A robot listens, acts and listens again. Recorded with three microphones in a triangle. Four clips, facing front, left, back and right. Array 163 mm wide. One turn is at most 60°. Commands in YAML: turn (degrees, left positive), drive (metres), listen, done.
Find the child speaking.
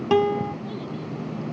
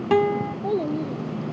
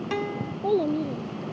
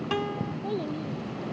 turn: 60
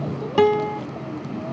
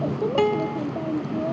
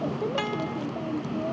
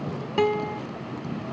turn: 60
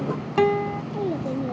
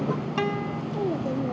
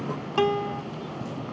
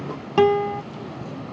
turn: 30
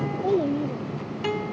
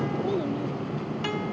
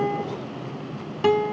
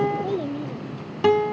turn: -15
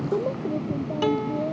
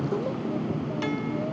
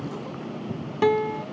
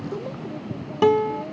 listen: true
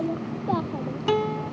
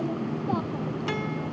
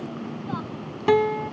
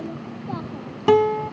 listen: true
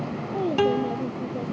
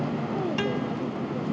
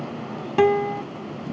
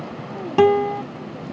done: "I heard a child speaking from this way, but can't make it out now."